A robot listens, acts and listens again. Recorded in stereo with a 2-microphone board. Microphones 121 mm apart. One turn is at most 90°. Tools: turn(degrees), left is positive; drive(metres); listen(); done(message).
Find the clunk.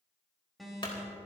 turn(degrees=45)
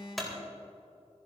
done("Found it: a clunk, straight ahead, 2 to 4 m away.")